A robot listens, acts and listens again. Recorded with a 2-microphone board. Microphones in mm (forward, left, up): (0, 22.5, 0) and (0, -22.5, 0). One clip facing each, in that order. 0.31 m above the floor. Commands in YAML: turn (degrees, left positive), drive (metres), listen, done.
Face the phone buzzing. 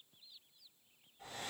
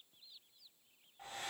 listen: true
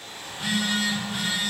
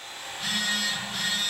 turn: 30
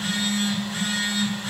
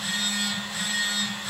turn: 140
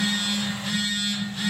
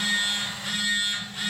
done: "Facing the phone buzzing."